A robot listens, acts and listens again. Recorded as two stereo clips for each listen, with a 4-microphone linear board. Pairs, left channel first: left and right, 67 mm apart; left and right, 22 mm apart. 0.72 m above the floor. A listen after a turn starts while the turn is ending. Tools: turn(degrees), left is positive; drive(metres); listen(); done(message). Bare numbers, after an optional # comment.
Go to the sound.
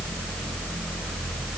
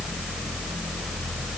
listen()
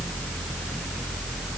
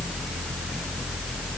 listen()
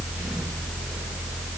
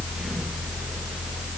done("I can't make out anything to turn to.")